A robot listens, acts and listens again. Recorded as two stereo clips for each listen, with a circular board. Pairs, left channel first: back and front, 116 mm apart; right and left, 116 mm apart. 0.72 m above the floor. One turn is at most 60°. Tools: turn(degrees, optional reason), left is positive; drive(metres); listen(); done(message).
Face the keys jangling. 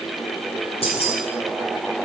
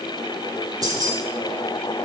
turn(degrees=60, reason="The keys jangling: 145° left.")
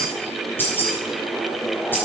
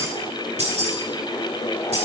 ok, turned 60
turn(degrees=60, reason="The keys jangling is now 110° left.")
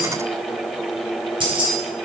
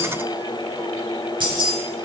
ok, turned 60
turn(degrees=45, reason="The keys jangling is now 45° left.")
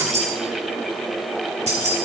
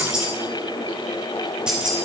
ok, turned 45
turn(degrees=10, reason="The keys jangling is now 10° left.")
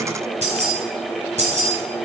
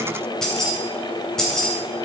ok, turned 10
done("Found it: keys jangling, straight ahead, 2 to 4 m away.")